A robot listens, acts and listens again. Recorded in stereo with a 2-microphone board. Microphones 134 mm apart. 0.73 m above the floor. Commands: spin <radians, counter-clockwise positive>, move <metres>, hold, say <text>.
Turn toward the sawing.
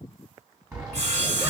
spin -0.87
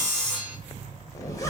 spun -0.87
say Facing the sawing.